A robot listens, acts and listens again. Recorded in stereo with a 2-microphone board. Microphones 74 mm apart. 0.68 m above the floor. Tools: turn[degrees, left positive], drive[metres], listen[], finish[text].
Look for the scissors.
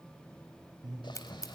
Thought: The scissors: about 45° left or 135° left.
Action: turn[45]
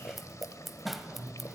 Action: finish[Found it: scissors, straight ahead.]